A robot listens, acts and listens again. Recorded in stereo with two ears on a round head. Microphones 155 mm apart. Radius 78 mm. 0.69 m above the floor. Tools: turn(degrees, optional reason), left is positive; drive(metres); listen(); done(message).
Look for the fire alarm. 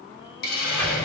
listen()
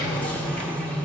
listen()
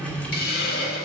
done("I can't make out a fire alarm to turn to.")